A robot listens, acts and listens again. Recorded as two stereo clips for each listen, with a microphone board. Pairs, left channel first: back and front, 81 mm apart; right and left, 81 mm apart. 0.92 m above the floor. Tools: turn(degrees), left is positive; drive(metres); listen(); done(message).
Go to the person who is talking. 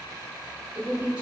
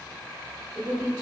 turn(degrees=70)
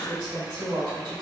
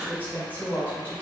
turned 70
turn(degrees=20)
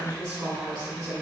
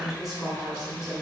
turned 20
drive(metres=1.0)
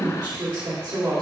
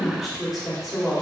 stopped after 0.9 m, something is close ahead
done("I am next to the woman speaking.")